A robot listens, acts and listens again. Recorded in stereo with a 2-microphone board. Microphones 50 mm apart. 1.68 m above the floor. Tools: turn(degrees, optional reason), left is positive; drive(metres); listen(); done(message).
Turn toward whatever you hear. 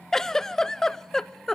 turn(degrees=30)
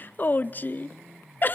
turn(degrees=135, reason="So it is at 135° left.")
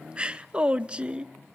turn(degrees=-25, reason="The giggle is now 25° right.")
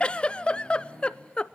turn(degrees=25, reason="The giggle is now 25° left.")
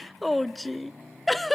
done("Found it: a giggle, straight ahead.")